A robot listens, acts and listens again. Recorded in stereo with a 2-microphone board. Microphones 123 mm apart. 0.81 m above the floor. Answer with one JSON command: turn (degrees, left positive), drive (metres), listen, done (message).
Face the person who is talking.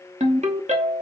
{"listen": true}
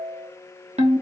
{"listen": true}
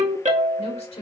{"turn": 55}
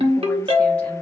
{"listen": true}
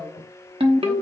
{"listen": true}
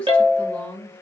{"turn": 10}
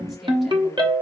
{"listen": true}
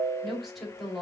{"done": "Found it: a woman speaking, straight ahead, 1 to 2 m away."}